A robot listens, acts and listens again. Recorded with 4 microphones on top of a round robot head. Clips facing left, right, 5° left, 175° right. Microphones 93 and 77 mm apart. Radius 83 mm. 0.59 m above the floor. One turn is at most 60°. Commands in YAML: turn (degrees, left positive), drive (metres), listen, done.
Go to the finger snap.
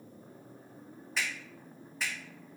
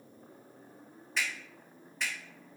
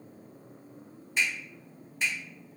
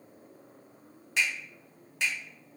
turn: 60
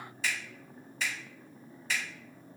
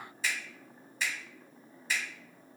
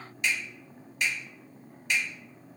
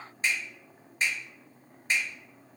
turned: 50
turn: 60
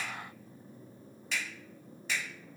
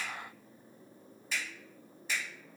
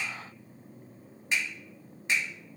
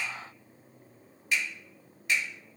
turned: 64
turn: 60
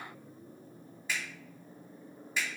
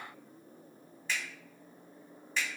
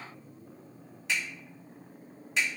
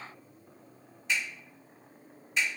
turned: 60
turn: 10
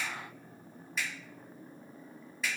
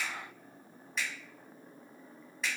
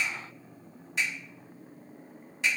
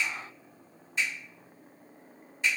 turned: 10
drive: 1.0
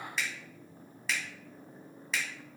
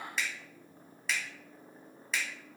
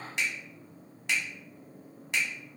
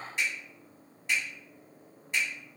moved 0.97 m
drive: 1.0
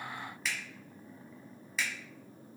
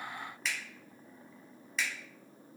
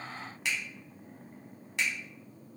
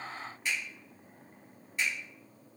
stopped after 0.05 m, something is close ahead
done: "Arrived at the finger snap, straight ahead."